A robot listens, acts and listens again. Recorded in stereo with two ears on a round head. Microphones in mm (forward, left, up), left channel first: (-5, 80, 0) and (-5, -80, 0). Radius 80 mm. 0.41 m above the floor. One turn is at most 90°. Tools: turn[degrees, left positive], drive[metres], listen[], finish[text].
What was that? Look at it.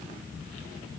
Action: listen[]
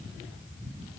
Action: listen[]
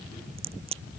Thought: The crack: about 35° right or 145° right.
Action: turn[-35]
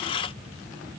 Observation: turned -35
Action: listen[]
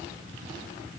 Action: finish[I heard a crack, but can't make it out now. It was about straight ahead or 110° right.]